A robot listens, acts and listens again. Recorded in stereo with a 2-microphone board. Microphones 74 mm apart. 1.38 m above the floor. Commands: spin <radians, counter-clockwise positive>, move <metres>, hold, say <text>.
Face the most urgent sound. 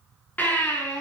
spin 0.35
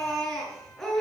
say Facing the baby crying.